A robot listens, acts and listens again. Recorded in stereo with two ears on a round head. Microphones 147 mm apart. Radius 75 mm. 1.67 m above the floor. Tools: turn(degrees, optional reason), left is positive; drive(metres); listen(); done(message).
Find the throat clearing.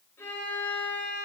listen()
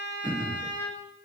turn(degrees=-25, reason="The throat clearing: about 25° right or 155° right.")
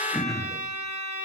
done("Facing the throat clearing.")